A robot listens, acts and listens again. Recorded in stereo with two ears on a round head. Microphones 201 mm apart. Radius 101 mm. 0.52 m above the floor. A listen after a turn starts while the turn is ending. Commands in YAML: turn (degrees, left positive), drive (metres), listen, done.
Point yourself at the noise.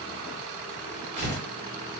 turn: -50
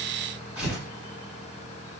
done: "Found it: tearing paper, straight ahead."